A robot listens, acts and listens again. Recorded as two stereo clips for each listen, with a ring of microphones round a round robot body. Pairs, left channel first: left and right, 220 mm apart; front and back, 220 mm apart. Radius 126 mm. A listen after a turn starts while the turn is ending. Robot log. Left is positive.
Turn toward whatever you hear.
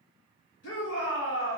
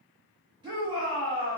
note: The shout: 110° left.
cmd yaw +110
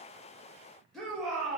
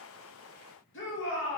end: Facing the shout.